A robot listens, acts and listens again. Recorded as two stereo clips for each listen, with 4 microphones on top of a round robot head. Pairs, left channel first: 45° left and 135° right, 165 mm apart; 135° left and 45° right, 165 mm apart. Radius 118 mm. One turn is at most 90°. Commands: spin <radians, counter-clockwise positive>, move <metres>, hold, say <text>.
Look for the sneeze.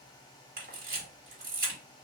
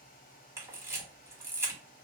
hold
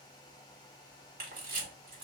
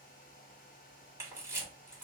hold
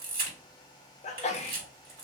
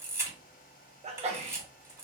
say Found it: a sneeze, straight ahead, under 1 m away.